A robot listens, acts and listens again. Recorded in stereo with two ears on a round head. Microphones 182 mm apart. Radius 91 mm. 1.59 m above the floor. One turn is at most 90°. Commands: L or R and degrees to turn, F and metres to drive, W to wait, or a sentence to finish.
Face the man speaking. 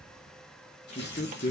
L40
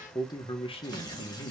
L40
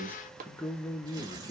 L20
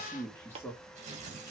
L20
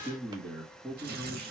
Facing the man speaking, 2 to 4 m away.